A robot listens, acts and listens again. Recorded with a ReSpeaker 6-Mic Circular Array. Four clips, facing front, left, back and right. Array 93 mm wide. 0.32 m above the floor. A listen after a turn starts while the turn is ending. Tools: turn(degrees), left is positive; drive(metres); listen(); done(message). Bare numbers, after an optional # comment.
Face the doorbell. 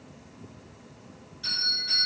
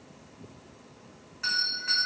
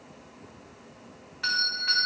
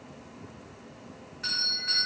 # The doorbell: 165° left.
turn(165)
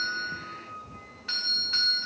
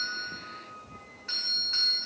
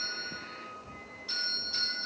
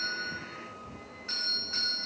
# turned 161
done("Found it: a doorbell, straight ahead, 2 to 4 m away.")